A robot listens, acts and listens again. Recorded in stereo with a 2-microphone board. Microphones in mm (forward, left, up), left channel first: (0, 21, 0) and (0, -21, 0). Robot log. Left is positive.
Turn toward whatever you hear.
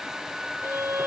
cmd yaw -90
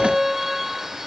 end: Facing the violin.